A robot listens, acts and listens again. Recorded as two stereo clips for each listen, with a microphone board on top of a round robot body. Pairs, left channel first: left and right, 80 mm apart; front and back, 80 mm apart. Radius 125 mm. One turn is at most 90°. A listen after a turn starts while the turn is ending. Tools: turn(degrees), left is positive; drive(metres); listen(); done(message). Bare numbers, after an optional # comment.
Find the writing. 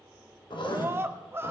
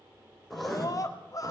# The writing: 90° left.
turn(90)
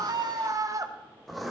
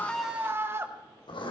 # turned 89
done("Found it: writing, straight ahead.")